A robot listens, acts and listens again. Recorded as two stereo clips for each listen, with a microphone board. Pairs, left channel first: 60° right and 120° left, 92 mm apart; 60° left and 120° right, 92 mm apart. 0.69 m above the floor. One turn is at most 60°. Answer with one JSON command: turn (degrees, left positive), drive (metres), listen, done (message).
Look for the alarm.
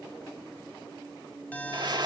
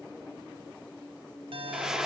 {"turn": -60}
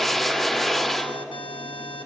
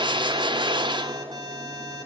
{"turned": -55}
{"turn": -60}
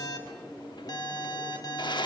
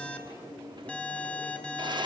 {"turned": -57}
{"turn": -15}
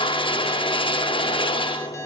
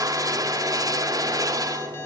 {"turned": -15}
{"done": "Facing the alarm."}